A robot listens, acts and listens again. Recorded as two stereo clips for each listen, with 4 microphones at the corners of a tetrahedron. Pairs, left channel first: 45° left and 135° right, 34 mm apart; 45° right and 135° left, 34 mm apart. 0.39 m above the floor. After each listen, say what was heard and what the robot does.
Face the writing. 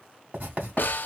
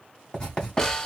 The writing: 105° right. Turn 105° right.
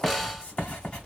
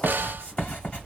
Found it: writing, straight ahead.